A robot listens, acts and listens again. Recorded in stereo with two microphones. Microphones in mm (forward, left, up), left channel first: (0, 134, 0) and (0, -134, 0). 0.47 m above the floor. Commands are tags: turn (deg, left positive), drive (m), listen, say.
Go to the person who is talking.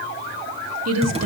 <turn deg="-65"/>
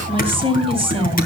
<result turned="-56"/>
<turn deg="-20"/>
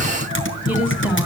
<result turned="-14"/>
<drive m="1.0"/>
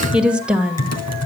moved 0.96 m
<drive m="1.0"/>
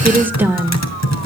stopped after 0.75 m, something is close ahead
<turn deg="-10"/>
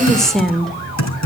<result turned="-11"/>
<say>Arrived at the woman speaking, straight ahead.</say>